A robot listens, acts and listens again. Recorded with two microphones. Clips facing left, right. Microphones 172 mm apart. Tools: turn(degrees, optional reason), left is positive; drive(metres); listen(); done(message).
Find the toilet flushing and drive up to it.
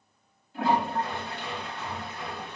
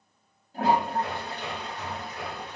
turn(degrees=-40, reason="The toilet flushing: about 40° right or 140° right.")
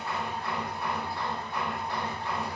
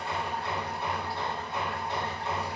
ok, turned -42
listen()
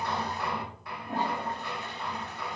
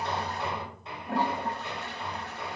turn(degrees=-100, reason="So it is at 100° right.")
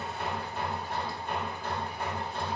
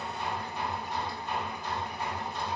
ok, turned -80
turn(degrees=-20, reason="Nothing new. It was at 20° right.")
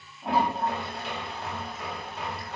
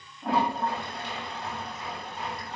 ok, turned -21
drive(metres=1.0)
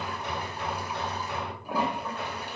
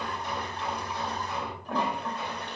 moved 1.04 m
turn(degrees=10, reason="The toilet flushing is now 10° left.")
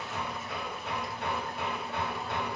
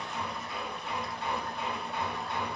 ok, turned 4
listen()
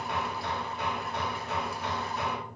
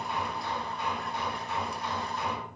listen()
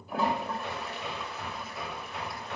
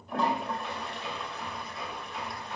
drive(metres=1.0)
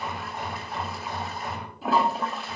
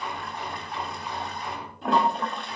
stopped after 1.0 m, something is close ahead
done("I am next to the toilet flushing.")